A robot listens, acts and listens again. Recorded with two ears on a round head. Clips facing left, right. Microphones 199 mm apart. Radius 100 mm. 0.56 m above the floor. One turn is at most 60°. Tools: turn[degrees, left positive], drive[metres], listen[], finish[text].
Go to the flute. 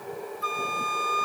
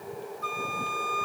Thought: The flute: about 15° left or 165° left.
Action: turn[15]
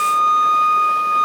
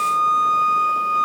Thought: So it is at 150° left.
Action: turn[60]
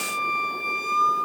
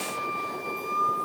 Thought: The flute is now 85° left.
Action: turn[60]
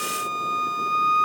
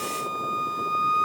Thought: The flute is now 30° left.
Action: turn[30]
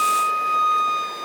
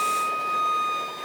Thought: The flute is now 15° left.
Action: turn[15]
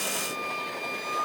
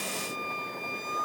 Action: drive[1.0]
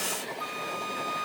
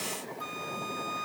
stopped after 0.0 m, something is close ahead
Action: finish[Blocked. The flute is further on, straight ahead.]